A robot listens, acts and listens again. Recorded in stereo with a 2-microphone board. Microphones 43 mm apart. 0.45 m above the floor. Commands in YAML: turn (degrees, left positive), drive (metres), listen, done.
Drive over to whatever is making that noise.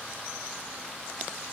listen: true
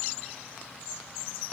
listen: true
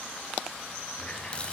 turn: 25
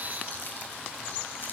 listen: true
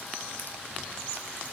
listen: true
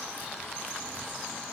done: "I heard a running tap, but can't make it out now. It was about straight ahead or 130° left. I did not reach it."